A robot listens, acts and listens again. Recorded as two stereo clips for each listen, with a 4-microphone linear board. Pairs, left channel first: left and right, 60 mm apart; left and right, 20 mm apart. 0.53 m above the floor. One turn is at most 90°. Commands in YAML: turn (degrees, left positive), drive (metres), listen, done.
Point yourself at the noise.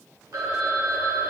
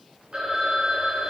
turn: -65
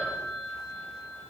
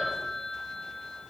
turn: -45
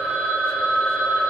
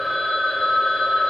turn: -10
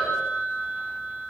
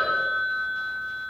done: "Found it: a phone ringing, straight ahead, 1 to 2 m away."